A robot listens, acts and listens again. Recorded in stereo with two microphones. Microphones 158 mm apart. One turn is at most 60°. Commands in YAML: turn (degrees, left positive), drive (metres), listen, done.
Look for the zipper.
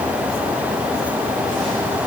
listen: true
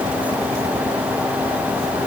listen: true
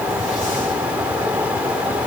done: "I can't make out a zipper to turn to."